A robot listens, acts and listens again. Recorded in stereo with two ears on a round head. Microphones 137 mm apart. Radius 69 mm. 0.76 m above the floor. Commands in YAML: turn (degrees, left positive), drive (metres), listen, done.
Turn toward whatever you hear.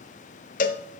turn: 60
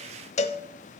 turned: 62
turn: 50
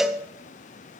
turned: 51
done: "Facing the cowbell, under 1 m away."